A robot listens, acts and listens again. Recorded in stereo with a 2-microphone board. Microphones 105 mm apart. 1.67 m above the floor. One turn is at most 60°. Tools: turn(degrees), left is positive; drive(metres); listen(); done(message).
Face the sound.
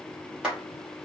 turn(degrees=-30)
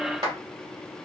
turn(degrees=-60)
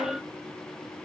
turn(degrees=-60)
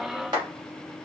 turn(degrees=-40)
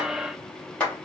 turn(degrees=15)
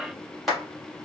done("Facing the clap, 2 to 4 m away.")